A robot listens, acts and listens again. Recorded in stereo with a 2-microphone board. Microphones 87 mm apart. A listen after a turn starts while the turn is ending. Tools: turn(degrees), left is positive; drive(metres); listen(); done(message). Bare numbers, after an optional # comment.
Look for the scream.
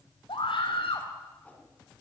turn(90)
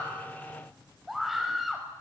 done("Found it: a scream, straight ahead, over 4 m away.")